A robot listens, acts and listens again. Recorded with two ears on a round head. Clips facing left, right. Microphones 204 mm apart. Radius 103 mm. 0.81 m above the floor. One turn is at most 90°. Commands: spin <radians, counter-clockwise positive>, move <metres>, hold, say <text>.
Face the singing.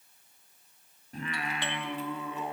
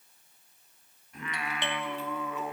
spin 0.44
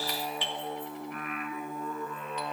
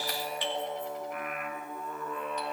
spin 0.70
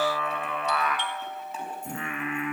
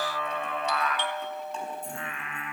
spin 1.57
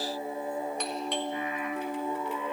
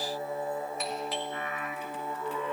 spin 0.26
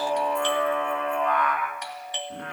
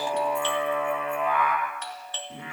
say Found it: singing, straight ahead, over 4 m away.